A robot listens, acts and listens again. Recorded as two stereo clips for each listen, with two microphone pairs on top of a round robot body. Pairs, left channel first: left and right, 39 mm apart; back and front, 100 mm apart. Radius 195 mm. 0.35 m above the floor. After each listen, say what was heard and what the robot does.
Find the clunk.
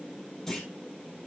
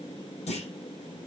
The clunk: 170° left. Turn 170° left.
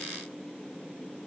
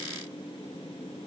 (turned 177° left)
Facing where the clunk came from. I can't hear it now.